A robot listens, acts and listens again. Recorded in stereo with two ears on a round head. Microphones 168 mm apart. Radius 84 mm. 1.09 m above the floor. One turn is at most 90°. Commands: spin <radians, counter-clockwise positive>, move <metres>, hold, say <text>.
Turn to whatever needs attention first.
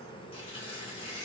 hold
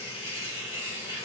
hold
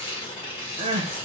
spin -0.52
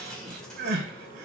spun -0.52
spin -1.57
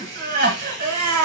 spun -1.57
spin -0.87
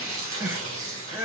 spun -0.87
spin -0.26
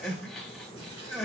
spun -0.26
say Found it: crying, straight ahead, 1 to 2 m away.